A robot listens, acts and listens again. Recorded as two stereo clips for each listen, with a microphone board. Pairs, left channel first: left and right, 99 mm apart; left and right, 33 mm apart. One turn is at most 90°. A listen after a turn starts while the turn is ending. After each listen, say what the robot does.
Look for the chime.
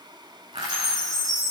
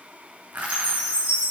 Turn 40° right.
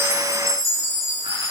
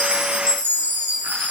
Turn 90° right.
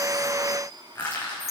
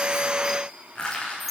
Found it: a chime, straight ahead, over 4 m away.